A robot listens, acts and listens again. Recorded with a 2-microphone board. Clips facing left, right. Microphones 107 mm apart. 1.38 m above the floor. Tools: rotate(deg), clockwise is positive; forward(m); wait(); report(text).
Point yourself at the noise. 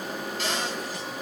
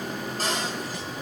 rotate(40)
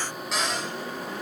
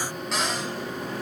report("Facing the cupboard door, over 4 m away.")